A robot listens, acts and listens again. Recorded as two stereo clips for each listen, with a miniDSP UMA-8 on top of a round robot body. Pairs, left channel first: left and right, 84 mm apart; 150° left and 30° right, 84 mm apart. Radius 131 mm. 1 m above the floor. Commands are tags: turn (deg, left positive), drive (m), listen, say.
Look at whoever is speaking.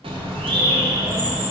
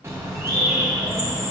<listen/>
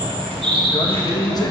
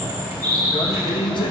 <turn deg="130"/>
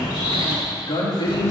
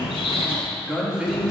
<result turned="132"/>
<turn deg="55"/>
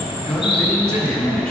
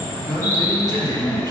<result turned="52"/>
<say>Facing the man speaking, 2 to 4 m away.</say>